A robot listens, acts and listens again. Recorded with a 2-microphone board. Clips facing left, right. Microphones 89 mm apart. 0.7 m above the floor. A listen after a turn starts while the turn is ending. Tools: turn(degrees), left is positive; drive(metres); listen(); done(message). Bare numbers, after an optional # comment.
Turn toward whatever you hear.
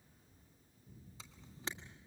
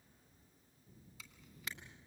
# The camera shutter: about 30° left or 150° left.
turn(30)
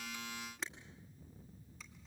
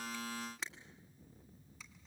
done("Facing the camera shutter, 1 to 2 m away.")